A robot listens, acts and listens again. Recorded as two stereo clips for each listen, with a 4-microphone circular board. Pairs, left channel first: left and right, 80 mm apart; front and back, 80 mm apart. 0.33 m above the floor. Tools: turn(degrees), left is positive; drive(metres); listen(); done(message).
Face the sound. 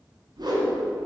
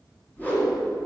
turn(degrees=-65)
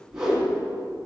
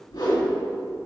done("Facing the whoosh.")